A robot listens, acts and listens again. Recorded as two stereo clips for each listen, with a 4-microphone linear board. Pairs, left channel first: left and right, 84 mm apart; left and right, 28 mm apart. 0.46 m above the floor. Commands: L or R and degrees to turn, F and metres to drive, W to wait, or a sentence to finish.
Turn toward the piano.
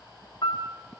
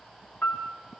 L70
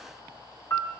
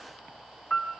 L35
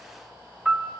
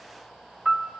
Facing the piano, 1 to 2 m away.